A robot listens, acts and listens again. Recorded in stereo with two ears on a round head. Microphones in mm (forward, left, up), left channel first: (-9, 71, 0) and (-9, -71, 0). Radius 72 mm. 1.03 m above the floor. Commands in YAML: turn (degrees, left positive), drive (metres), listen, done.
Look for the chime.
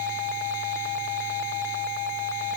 listen: true
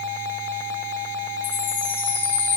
turn: 30
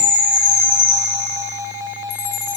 turn: 140
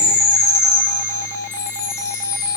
turn: 20
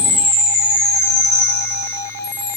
done: "Found it: a chime, straight ahead."